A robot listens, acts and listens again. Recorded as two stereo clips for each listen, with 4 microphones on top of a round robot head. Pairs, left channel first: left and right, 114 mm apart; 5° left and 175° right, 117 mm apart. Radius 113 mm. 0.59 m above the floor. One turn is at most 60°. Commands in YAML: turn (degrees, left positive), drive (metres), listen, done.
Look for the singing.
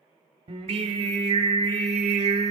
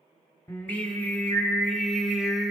turn: -60
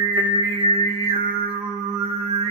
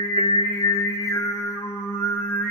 turn: -60
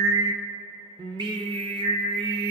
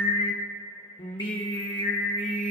turn: -50
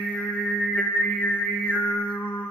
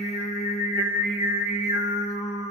turn: 10
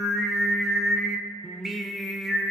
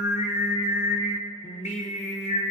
done: "Facing the singing, 1 to 2 m away."